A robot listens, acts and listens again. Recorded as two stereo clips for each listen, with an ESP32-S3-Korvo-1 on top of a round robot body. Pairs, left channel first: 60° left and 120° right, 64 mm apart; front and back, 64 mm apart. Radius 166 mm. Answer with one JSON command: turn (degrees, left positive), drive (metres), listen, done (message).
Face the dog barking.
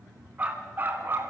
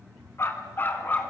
{"turn": -65}
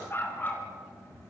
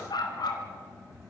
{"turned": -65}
{"done": "Found it: a dog barking, straight ahead."}